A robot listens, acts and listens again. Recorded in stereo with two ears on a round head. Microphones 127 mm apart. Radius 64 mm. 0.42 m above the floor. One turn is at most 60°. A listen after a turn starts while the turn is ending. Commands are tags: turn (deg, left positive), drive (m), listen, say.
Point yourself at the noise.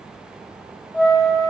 <turn deg="-30"/>
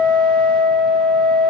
<turn deg="-60"/>
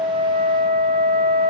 <turn deg="-60"/>
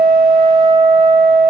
<turn deg="-45"/>
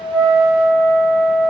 <turn deg="20"/>
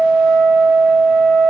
<say>Found it: a flute, straight ahead.</say>